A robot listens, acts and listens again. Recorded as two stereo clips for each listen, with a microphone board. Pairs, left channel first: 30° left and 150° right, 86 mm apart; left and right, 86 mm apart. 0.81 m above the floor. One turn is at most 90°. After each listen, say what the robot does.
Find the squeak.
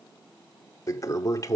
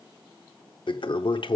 Keep listening.
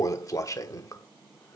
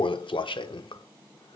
Keep listening.
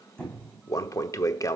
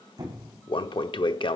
Turn 50° right.
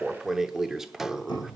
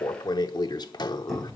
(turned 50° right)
Facing the squeak.